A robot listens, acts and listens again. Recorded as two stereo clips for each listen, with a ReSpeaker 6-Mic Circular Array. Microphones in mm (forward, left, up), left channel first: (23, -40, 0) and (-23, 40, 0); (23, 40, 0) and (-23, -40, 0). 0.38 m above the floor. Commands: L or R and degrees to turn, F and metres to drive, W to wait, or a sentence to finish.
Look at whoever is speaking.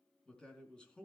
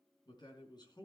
L20
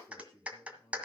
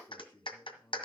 Facing the man speaking, over 4 m away.